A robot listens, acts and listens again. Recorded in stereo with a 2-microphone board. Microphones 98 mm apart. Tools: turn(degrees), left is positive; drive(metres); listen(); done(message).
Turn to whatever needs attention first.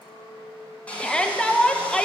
turn(degrees=30)
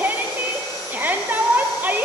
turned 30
turn(degrees=-20)
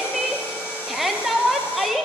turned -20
done("Found it: a shout, straight ahead.")